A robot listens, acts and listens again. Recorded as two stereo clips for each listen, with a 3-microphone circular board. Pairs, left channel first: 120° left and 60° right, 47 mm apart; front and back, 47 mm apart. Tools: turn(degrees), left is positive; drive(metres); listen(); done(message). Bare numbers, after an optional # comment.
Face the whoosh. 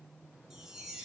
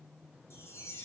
listen()
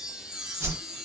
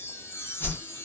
# The whoosh: 35° right.
turn(-35)
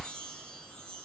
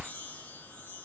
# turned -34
listen()
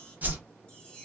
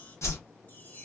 done("Found it: a whoosh, straight ahead.")